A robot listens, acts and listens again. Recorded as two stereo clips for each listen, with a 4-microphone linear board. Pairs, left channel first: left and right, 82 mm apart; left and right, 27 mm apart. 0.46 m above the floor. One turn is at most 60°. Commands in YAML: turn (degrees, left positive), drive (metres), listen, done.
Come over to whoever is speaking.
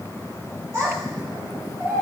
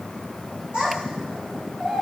turn: -40
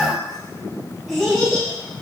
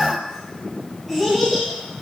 drive: 1.0
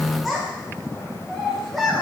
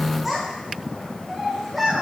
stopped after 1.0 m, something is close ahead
done: "Arrived at the child speaking, straight ahead."